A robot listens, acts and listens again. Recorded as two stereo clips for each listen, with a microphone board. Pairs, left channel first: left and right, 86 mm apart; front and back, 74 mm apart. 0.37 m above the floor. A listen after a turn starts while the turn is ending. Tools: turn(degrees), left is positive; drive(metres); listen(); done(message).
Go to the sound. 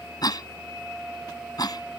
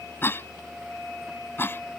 turn(degrees=60)
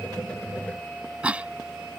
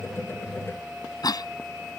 turn(degrees=-15)
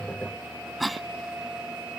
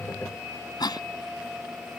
drive(metres=1.0)
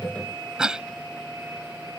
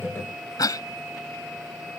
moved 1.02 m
turn(degrees=-10)
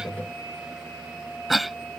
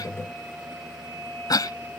drive(metres=1.0)
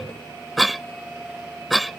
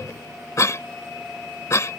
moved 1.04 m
drive(metres=1.0)
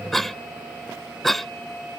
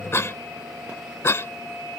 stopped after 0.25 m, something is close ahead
done("Arrived at the cough, straight ahead.")